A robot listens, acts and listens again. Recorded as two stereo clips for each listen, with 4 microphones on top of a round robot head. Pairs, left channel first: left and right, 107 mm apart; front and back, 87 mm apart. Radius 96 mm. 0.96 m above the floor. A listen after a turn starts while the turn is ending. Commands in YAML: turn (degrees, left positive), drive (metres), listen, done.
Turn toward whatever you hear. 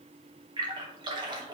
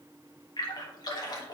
turn: -40
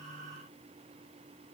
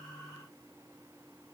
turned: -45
done: "I heard a splash from this way, but can't make it out now."